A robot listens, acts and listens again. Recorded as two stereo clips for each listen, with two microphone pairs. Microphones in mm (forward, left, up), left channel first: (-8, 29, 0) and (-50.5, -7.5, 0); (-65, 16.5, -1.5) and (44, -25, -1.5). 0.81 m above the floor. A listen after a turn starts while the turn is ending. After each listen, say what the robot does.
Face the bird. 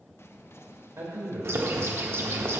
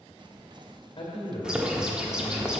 Turn 105° right.
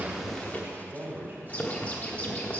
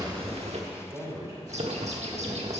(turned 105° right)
Turn 20° right.
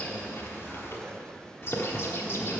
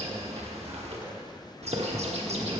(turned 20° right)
Found it: a bird, straight ahead.